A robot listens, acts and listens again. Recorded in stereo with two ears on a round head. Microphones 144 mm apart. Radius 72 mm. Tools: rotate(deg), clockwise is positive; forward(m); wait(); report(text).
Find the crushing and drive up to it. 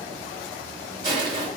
rotate(35)
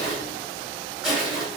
forward(1.0)
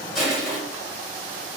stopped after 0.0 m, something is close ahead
report("Blocked. The crushing is further on, straight ahead.")